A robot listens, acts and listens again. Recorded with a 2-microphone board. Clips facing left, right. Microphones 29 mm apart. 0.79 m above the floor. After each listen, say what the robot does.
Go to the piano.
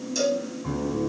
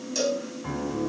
Turn 50° right.
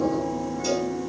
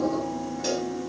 Drive 1.0 m forward.
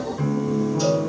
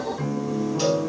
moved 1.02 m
Drive 1.0 m forward.
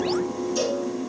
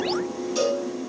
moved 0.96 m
Turn 10° left.
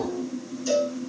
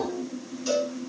Drive 1.0 m forward.
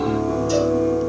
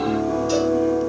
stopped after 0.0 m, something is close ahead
Arrived at the piano, straight ahead.